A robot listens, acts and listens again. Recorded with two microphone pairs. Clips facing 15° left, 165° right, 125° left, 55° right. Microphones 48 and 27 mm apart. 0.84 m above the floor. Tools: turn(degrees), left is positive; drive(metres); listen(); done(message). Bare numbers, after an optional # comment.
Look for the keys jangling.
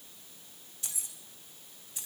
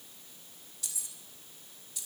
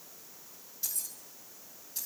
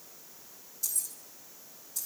# The keys jangling: 75° left.
turn(75)
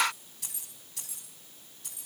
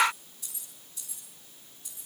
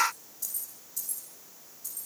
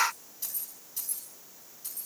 done("Found it: keys jangling, straight ahead.")